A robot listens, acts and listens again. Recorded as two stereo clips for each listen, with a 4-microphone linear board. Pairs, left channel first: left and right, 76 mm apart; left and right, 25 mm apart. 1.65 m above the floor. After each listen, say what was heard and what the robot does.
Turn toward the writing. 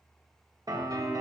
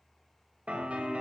Keep listening.
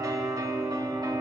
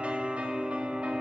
Keep listening.
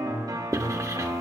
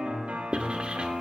The writing: about 45° right or 135° right. Turn 45° right.
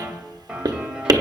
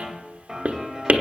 So it is at 80° right. Turn 80° right.
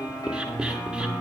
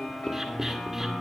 Keep listening.
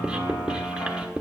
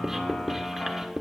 The writing is now 10° right. Turn 10° right.
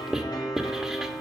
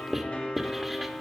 Facing the writing.